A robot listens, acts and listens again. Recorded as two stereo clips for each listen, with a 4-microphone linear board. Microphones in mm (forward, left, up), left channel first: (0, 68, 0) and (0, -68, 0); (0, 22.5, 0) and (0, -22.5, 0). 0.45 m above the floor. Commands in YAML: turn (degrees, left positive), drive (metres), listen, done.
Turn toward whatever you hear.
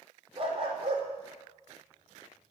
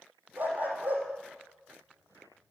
turn: -45
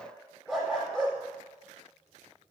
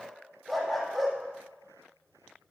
done: "Found it: a dog barking, straight ahead."